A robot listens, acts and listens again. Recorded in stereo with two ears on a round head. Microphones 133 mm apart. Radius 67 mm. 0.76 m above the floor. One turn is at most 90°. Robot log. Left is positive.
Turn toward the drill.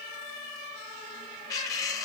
cmd idle
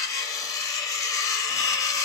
cmd idle
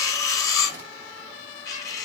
end: I can't make out a drill, only cutlery clinking.